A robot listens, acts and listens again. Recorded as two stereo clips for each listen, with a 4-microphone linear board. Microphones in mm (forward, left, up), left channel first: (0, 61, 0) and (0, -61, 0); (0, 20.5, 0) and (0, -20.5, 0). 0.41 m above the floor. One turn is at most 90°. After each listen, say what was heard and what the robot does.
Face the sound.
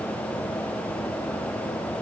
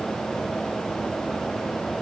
Keep listening.
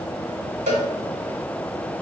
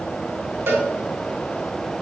Turn 90° right.
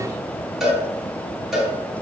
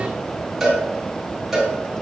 Found it: a cowbell, straight ahead.